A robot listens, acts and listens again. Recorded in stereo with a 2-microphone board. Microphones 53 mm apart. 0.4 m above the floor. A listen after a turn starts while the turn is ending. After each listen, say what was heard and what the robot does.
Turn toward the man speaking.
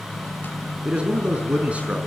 The man speaking: about 25° right or 155° right. Turn 25° right.
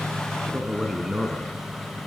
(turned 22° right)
Turn 30° right.
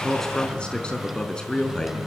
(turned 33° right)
So it is at 15° left. Turn 15° left.
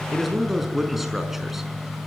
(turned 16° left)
Facing the man speaking, over 4 m away.